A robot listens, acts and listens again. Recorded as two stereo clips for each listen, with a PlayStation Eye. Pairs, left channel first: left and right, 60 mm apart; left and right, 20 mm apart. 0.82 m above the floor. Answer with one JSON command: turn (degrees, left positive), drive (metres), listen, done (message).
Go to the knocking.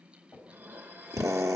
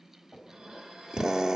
{"turn": 40}
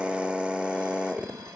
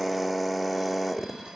{"listen": true}
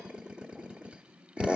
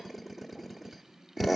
{"listen": true}
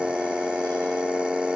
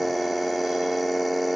{"done": "I heard knocking, but can't make it out now. It was about straight ahead or 100° left. I did not reach it."}